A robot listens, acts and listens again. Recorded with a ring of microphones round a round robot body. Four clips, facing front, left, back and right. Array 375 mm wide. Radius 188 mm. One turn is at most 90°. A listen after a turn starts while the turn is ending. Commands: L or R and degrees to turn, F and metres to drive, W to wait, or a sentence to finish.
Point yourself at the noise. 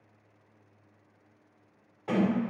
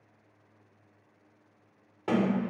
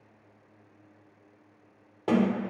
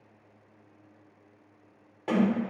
L90
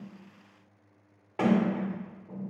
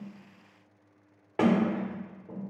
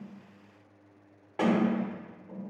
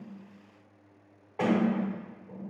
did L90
L85
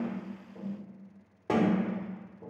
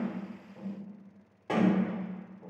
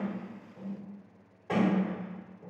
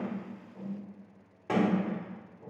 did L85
R15
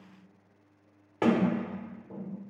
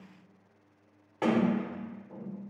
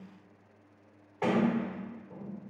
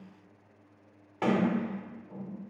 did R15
Facing the sliding door.